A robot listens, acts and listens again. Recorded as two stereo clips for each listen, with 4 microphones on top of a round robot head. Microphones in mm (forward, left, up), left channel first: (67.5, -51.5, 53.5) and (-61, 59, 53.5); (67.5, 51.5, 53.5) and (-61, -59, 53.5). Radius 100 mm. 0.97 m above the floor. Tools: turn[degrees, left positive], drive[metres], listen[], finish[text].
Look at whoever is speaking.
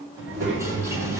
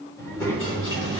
Thought: The child speaking: 125° left.
Action: turn[125]
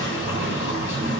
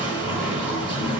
Thought: The child speaking is now 50° left.
Action: turn[50]
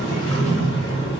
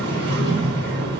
Thought: The child speaking is now 15° left.
Action: turn[15]
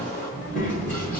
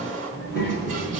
Action: finish[Found it: a child speaking, straight ahead.]